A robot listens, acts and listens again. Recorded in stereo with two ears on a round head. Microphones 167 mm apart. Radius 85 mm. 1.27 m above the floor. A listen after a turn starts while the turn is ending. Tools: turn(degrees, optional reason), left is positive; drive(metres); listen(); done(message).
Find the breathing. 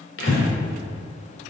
turn(degrees=65, reason="The breathing: about 65° left or 115° left.")
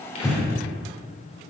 done("Found it: breathing, straight ahead, over 4 m away.")